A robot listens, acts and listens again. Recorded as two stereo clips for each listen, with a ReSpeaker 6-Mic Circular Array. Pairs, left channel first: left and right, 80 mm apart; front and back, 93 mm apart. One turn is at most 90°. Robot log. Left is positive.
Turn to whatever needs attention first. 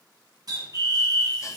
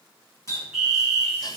note: The fire alarm: 95° left.
cmd yaw +90
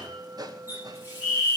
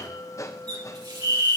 end: Facing the fire alarm, 2 to 4 m away.